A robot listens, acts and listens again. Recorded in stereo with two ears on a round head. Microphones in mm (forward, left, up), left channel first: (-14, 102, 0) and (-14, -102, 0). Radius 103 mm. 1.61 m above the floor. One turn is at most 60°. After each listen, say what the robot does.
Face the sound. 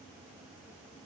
Keep listening.
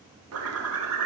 Turn 60° right.
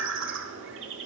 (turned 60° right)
Turn 55° right.
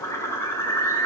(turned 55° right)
Turn 10° left.
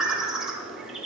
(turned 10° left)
Found it: a bird, straight ahead, 1 to 2 m away.